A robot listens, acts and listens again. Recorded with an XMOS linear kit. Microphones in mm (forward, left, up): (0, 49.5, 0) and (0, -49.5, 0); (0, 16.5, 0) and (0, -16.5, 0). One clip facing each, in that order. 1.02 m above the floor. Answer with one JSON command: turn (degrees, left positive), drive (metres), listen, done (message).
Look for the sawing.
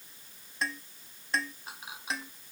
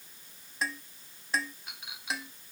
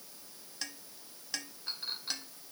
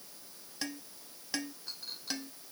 {"listen": true}
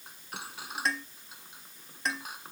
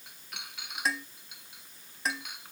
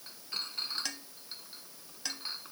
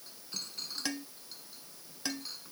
{"listen": true}
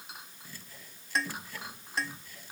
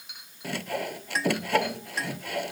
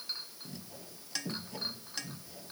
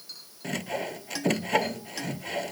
{"turn": -90}
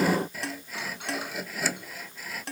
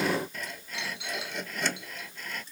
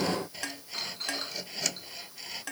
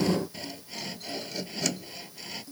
{"done": "Facing the sawing."}